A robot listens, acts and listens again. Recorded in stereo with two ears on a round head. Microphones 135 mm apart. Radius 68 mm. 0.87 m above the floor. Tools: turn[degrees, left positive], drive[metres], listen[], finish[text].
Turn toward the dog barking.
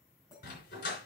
Thought: The dog barking: about 60° left or 120° left.
Action: turn[60]
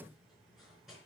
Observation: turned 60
Action: listen[]
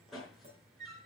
Action: finish[Found it: a dog barking, straight ahead.]